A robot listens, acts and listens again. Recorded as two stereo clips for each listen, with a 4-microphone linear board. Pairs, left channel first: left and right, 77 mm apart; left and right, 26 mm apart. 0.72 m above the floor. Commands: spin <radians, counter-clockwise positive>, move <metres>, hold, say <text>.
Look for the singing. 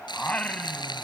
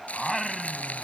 spin 0.26
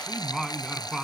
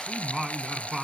spin -0.52
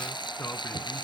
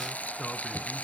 spin 0.44
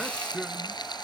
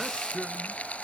say Found it: singing, straight ahead.